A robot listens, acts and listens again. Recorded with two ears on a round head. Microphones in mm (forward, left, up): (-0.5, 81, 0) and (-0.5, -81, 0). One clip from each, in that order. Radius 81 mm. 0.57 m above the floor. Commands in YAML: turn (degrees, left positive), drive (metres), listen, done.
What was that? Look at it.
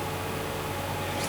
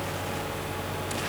listen: true
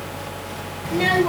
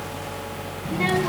turn: 70
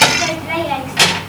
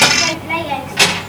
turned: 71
turn: 15
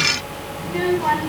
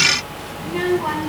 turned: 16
done: "Facing the child speaking, over 4 m away."